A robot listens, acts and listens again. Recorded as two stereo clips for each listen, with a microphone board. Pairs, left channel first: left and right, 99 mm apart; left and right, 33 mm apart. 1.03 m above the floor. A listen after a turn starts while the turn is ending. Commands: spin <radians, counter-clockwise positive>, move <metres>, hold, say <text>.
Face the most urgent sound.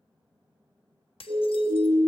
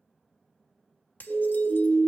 spin -1.05
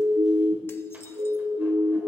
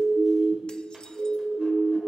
spin -0.96
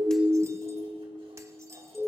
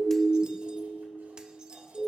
say Facing the siren.